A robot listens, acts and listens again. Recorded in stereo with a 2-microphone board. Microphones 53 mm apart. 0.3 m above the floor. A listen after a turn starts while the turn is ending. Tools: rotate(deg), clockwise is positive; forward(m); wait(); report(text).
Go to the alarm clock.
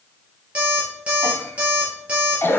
rotate(20)
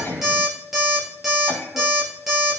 forward(1.0)
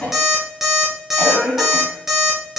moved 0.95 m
forward(1.0)
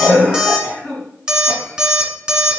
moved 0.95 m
rotate(15)
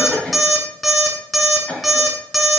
forward(1.0)
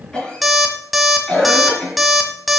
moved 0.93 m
forward(1.0)
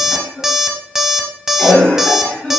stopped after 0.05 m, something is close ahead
report("I am next to the alarm clock.")